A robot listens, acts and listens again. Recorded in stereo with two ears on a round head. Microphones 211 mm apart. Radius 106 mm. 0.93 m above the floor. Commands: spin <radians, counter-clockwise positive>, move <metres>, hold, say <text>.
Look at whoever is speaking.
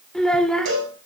spin 0.52
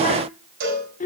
spin 2.53
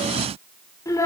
spin 0.26
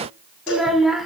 say Facing the child speaking, 1 to 2 m away.